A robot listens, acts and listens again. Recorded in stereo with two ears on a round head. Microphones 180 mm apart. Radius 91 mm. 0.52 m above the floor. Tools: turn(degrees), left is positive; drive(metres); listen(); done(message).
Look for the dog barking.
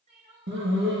turn(degrees=-60)
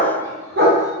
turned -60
turn(degrees=-50)
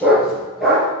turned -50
done("Found it: a dog barking, straight ahead, 2 to 4 m away.")